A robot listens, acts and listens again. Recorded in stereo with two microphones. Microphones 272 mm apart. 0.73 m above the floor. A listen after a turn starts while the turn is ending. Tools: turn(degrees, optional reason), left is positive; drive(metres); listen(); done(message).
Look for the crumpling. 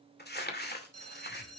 turn(degrees=40, reason="The crumpling: about 40° left or 140° left.")
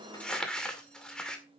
done("Facing the crumpling, 2 to 4 m away.")